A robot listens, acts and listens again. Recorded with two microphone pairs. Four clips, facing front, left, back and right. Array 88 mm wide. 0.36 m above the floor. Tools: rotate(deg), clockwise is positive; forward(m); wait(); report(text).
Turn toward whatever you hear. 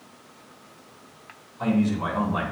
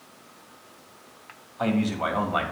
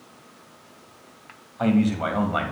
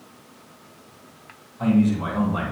rotate(-135)
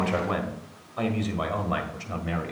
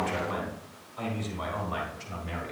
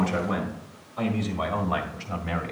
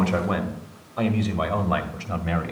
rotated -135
rotate(100)
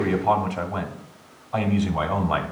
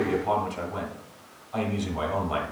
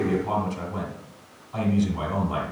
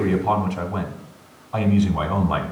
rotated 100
rotate(15)
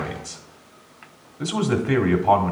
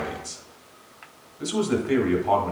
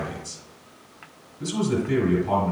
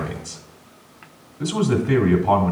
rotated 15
rotate(10)
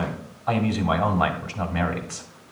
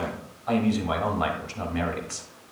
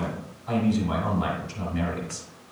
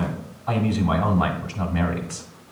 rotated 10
report("Found it: a man speaking, straight ahead, 1 to 2 m away.")